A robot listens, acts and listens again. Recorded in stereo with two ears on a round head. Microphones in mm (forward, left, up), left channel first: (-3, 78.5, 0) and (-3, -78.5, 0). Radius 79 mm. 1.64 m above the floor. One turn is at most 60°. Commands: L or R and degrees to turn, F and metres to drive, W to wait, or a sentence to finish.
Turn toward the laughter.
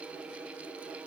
W
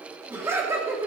R15
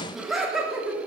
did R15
R30
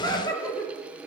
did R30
L20
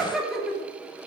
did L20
Found it: laughter, straight ahead, over 4 m away.